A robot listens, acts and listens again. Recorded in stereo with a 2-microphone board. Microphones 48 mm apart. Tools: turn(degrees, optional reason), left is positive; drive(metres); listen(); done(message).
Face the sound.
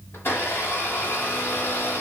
turn(degrees=50, reason="The blender: about 50° left or 130° left.")
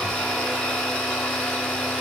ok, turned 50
done("Facing the blender, 2 to 4 m away.")